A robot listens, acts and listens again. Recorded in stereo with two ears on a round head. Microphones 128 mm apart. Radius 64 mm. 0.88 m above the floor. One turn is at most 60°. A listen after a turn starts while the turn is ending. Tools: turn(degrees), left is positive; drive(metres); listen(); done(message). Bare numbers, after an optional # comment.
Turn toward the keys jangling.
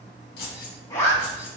# The keys jangling: about 70° left or 110° left.
turn(60)
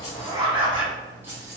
# So it is at 20° right.
turn(-20)
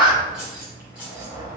# The keys jangling is now 10° right.
turn(-10)
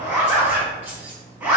# The keys jangling is now 15° right.
turn(-15)
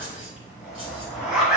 listen()
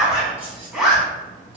listen()
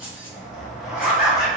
# The keys jangling is now 10° right.
turn(-10)
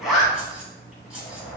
done("Found it: keys jangling, straight ahead.")